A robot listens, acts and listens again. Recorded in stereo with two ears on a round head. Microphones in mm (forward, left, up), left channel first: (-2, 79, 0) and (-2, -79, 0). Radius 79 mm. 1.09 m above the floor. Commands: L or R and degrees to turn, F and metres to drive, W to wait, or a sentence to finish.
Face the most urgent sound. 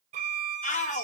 L45
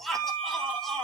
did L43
Facing the shout.